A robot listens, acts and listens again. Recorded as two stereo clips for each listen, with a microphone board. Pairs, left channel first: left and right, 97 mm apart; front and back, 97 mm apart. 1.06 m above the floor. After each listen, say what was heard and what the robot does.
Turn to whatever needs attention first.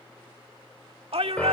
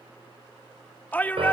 The shout: 70° right. Turn 70° right.
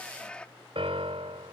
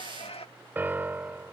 The shout is now 10° left. Turn 10° left.
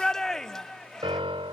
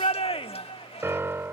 Found it: a shout, straight ahead.